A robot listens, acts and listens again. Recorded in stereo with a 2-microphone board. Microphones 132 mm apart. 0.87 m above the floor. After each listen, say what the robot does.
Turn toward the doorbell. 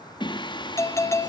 Turn 20° left.
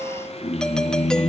Facing the doorbell.